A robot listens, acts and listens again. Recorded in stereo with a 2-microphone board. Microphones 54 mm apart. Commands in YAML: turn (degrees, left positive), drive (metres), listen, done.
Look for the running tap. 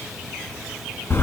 listen: true
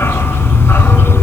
listen: true
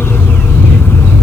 done: "I can't make out a running tap, only a dog barking."